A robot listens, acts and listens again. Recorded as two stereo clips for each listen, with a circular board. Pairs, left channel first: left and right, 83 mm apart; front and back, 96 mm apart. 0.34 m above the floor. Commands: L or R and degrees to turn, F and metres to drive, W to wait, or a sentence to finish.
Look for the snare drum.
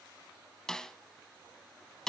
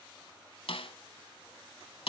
Facing the snare drum, 1 to 2 m away.